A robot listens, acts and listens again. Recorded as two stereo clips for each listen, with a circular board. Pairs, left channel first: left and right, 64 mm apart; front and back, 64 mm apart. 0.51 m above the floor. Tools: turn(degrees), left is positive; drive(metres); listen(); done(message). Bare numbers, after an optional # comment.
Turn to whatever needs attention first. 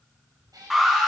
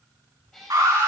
# The alarm: 175° right.
turn(-175)
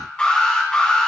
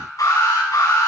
# The alarm is now 15° left.
turn(15)
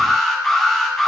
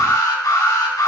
done("Found it: an alarm, straight ahead, over 4 m away.")